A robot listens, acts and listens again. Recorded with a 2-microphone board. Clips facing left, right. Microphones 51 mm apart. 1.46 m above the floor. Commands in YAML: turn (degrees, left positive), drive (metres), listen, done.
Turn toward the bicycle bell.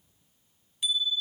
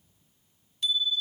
turn: 30
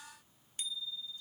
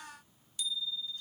turn: 140
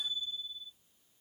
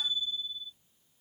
turn: 45
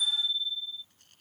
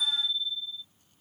turn: 10
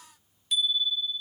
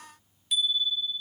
done: "Found it: a bicycle bell, straight ahead."